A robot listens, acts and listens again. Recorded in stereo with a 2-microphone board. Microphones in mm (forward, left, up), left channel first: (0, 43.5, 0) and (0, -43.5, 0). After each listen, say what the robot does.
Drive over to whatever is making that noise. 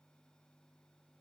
Keep listening.
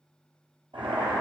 Turn 90° right.
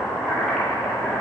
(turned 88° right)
Turn 10° left.
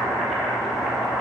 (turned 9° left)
Drive 1.0 m forward.
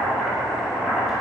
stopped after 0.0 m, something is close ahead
Blocked. The boiling is further on, straight ahead.